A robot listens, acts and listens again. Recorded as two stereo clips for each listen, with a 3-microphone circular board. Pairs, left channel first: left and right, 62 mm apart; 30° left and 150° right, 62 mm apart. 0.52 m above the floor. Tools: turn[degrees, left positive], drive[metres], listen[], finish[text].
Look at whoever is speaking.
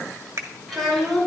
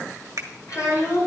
Action: finish[Facing the child speaking, over 4 m away.]